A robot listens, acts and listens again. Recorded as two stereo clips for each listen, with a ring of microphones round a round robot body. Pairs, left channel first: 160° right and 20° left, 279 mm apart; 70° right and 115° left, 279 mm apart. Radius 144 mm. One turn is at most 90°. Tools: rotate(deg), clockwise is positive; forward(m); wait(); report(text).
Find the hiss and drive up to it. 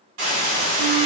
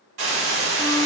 rotate(-65)
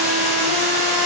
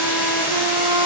forward(1.0)
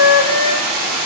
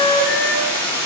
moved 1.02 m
rotate(-15)
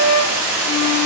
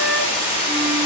forward(1.0)
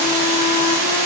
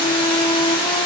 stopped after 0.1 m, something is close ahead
report("Arrived at the hiss, straight ahead.")